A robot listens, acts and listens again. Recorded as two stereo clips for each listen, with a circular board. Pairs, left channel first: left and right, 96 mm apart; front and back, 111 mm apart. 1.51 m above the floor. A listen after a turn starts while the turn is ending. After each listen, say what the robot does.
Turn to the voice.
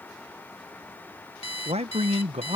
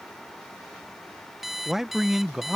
Turn 95° right.
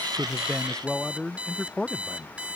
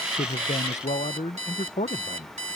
Facing the man speaking.